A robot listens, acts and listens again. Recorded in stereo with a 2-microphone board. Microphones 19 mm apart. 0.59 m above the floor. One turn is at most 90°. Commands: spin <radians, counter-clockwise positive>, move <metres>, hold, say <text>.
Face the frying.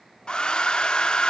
hold
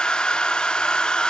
hold
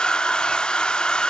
say I can't make out frying, only a hair dryer.